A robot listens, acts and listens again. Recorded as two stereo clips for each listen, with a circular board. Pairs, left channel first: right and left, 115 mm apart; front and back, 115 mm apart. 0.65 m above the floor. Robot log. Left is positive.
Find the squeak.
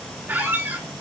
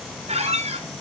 note: The squeak: 165° left.
cmd yaw +165
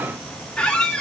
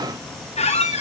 end: Found it: a squeak, straight ahead, 2 to 4 m away.